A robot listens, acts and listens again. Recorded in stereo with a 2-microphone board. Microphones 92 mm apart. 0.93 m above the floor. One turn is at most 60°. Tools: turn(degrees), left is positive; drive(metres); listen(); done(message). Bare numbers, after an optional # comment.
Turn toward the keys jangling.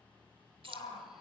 # The keys jangling: about 70° right or 110° right.
turn(-60)
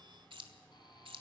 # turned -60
# So it is at 70° right.
turn(-60)
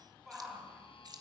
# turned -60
# The keys jangling is now 50° right.
turn(-50)
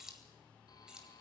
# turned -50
# The keys jangling is now 10° right.
turn(-10)
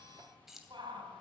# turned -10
done("Facing the keys jangling.")